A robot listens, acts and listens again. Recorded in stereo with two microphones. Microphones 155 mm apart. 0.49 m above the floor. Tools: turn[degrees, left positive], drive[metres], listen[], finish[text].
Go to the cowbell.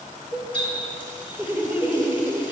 Thought: The cowbell: about 75° left or 105° left.
Action: turn[75]
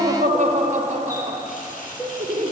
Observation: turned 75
Thought: So it is at 25° left.
Action: turn[25]
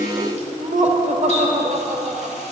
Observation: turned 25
Action: listen[]
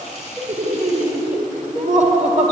Action: drive[1.0]
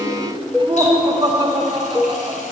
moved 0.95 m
Action: drive[1.0]
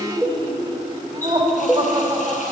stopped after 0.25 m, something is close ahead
Action: finish[I am next to the cowbell.]